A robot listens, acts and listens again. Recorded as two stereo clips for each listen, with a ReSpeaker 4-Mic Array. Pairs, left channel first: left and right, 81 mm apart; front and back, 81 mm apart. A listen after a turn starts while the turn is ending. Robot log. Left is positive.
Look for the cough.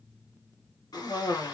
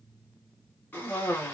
note: The cough: 65° left.
cmd yaw +65
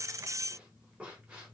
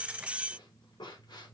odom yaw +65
note: The cough is now 15° right.
cmd yaw -15
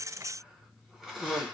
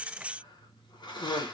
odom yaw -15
end: Found it: a cough, straight ahead.